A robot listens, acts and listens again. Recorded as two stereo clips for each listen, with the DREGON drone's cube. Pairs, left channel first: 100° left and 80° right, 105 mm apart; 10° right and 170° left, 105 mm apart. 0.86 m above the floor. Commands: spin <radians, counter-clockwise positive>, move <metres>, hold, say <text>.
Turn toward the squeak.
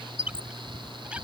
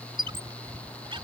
spin -2.71
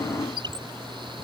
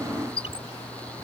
spin -0.61
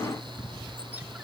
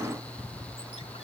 hold
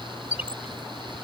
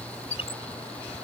say Facing the squeak.